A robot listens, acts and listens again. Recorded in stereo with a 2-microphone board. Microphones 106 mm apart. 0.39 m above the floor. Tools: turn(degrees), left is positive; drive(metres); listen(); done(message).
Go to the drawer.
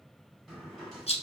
turn(degrees=30)
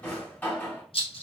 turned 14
turn(degrees=160)
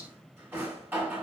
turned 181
turn(degrees=-20)
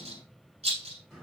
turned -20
drive(metres=1.0)
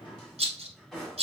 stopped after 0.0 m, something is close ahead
done("Something is in my way. I am facing the drawer but have not reached it.")